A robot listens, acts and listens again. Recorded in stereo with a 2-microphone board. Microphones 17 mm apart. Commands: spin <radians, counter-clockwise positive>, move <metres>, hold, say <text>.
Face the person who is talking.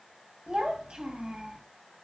spin -1.57
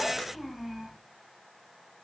say Facing the child speaking, 2 to 4 m away.